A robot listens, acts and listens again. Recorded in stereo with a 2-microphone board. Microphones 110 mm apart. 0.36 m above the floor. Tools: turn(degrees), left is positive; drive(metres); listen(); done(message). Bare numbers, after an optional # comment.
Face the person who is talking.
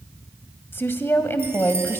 # The woman speaking: about 20° left or 160° left.
turn(20)
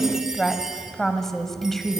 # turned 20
done("Found it: a woman speaking, straight ahead.")